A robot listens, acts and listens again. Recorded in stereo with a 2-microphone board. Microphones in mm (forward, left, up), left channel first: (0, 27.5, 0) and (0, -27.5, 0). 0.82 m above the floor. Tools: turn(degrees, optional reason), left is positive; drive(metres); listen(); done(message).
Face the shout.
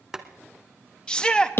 turn(degrees=15, reason="The shout: about 15° left or 165° left.")
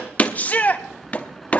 turn(degrees=150, reason="So it is at 150° left.")
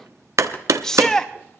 turn(degrees=15, reason="The shout is now 15° left.")
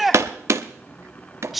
done("Facing the shout, under 1 m away.")